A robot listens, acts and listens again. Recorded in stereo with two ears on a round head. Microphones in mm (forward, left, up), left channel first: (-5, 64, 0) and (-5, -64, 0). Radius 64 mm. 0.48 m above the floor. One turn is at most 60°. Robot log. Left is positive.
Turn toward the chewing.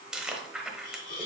cmd yaw -30
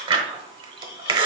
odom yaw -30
note: So it is at 145° right.
cmd yaw -60
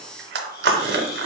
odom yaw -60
note: The chewing is now 85° right.
cmd yaw -60
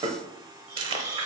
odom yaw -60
note: The chewing is now 35° right.
cmd yaw -35
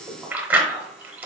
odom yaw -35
note: The chewing is now 10° right.
cmd yaw -10
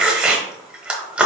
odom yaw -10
end: Found it: chewing, straight ahead.